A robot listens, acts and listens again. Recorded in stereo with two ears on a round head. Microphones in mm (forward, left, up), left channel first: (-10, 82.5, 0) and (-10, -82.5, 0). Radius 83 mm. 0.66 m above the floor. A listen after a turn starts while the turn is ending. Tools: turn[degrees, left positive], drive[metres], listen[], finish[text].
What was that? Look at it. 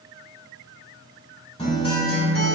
Thought: The guitar: about 30° left or 150° left.
Action: turn[30]
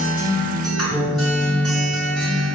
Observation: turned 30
Action: finish[Facing the guitar.]